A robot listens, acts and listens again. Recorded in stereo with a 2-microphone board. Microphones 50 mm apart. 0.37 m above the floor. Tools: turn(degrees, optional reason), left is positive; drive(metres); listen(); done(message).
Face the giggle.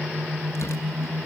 listen()
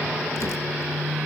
listen()
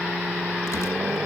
done("I can't make out a giggle to turn to.")